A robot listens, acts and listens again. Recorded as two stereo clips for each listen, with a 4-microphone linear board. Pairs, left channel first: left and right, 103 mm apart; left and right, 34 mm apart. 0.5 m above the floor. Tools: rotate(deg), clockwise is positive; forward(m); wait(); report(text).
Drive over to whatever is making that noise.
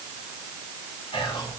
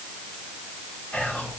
rotate(-60)
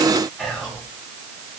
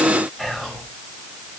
forward(1.0)
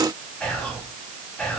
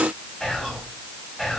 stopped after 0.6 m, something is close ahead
rotate(-10)
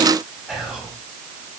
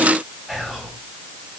report("Blocked. The whispering is further on, straight ahead.")